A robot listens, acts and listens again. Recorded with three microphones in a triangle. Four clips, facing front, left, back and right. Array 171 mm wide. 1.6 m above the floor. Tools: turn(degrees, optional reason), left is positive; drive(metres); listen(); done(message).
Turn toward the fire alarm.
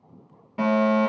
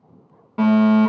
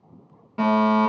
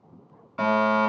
turn(degrees=100, reason="The fire alarm: 100° left.")
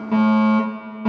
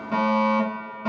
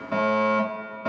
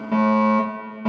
turn(degrees=-20, reason="The fire alarm is now 20° right.")
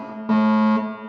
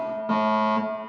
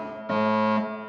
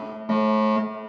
done("Found it: a fire alarm, straight ahead, over 4 m away.")